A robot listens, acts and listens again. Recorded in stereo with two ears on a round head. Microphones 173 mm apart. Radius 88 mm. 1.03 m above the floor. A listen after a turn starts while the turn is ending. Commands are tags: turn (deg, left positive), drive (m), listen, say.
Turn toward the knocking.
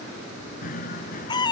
<turn deg="40"/>
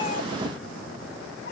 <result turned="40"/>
<listen/>
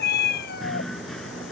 <say>Facing the knocking.</say>